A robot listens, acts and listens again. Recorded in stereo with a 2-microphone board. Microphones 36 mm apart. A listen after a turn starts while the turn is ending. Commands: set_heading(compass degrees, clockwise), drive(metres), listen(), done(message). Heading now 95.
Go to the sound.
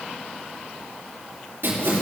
set_heading(165)
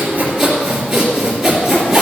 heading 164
drive(1.0)
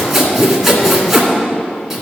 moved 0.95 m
drive(1.0)
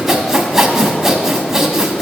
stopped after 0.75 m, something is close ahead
set_heading(174)
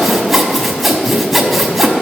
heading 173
done("I am next to the sawing.")